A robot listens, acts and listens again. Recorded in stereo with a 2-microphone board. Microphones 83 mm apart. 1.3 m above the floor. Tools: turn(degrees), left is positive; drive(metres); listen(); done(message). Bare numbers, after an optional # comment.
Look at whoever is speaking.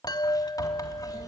# The child speaking: about 65° right or 115° right.
turn(-65)
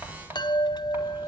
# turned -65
# So it is at 50° right.
turn(-50)
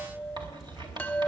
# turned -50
# The child speaking is now 10° right.
turn(-10)
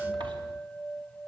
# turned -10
listen()
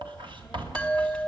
done("Found it: a child speaking, straight ahead, over 4 m away.")